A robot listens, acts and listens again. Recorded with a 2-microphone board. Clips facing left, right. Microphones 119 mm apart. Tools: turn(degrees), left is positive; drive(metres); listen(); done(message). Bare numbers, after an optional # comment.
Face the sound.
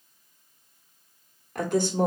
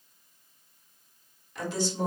# The woman speaking: about 55° left or 125° left.
turn(55)
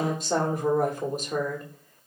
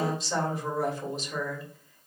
# So it is at 60° left.
turn(60)
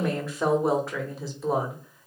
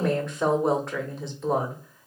done("Found it: a woman speaking, straight ahead, 1 to 2 m away.")